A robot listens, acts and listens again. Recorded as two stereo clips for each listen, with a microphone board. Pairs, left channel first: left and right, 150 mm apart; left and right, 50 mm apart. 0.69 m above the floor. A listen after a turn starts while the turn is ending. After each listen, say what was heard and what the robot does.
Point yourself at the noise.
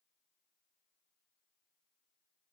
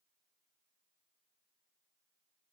Keep listening.
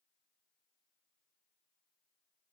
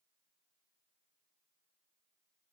Keep listening.
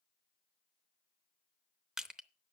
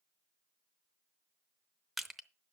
Turn 30° right.
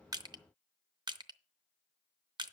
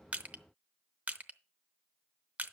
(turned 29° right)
So it is at 150° right. Turn 150° right.
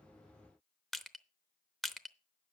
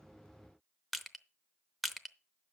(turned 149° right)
Found it: crushing, straight ahead, under 1 m away.